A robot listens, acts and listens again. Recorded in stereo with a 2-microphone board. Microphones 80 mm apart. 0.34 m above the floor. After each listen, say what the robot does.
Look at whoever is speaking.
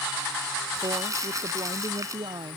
Turn 70° right.
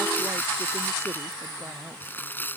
Keep listening.
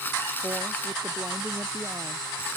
Keep listening.
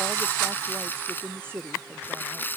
Turn 25° right.
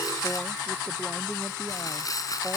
Keep listening.
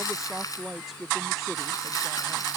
Facing the woman speaking.